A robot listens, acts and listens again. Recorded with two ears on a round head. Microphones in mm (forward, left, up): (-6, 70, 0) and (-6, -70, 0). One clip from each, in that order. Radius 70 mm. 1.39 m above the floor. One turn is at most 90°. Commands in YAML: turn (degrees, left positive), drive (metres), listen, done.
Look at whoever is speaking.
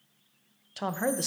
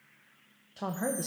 turn: 60
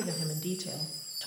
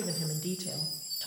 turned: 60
done: "Found it: a woman speaking, straight ahead, under 1 m away."